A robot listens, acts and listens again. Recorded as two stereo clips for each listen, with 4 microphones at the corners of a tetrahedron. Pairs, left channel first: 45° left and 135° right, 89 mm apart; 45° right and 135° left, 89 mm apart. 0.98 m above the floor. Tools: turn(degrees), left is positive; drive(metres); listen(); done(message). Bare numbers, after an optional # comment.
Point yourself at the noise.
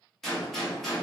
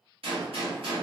# The gunshot: 130° left.
turn(130)
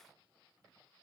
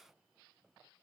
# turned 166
# Nothing new. It was at 35° right.
turn(-35)
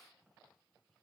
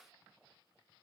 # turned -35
done("I heard a gunshot from this way, but can't make it out now.")